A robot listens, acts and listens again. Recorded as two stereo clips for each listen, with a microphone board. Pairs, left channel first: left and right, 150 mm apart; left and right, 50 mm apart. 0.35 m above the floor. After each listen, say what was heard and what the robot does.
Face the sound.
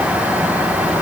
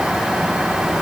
Keep listening.
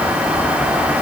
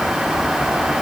Keep listening.
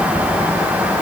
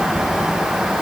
I can't make out anything to turn to.